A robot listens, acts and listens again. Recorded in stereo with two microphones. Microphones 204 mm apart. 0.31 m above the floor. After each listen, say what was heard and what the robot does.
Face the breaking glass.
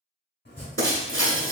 The breaking glass: about 75° right or 105° right. Turn 75° right.
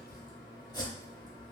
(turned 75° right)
Keep listening.
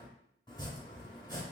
I heard breaking glass, but can't make it out now. It was about straight ahead or 30° right.